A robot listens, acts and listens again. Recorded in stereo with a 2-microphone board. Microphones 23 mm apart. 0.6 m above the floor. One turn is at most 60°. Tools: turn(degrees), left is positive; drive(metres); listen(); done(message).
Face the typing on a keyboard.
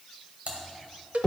turn(degrees=-60)
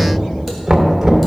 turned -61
listen()
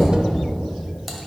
listen()
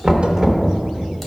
done("I heard typing on a keyboard, but can't make it out now. It was about 5° left or 60° right.")